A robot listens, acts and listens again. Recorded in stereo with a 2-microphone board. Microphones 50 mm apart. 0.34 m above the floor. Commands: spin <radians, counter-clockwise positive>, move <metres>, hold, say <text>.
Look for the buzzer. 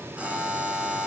spin -0.44
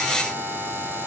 spin -2.27
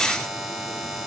say Found it: a buzzer, straight ahead.